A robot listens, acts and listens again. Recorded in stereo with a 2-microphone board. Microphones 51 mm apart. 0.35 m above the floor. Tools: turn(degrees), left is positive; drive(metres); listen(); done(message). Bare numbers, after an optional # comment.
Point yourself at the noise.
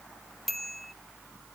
turn(30)
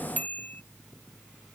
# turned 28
# So it is at 150° left.
turn(150)
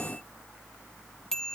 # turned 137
# The bicycle bell is now 10° left.
turn(10)
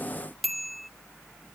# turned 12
done("Found it: a bicycle bell, straight ahead.")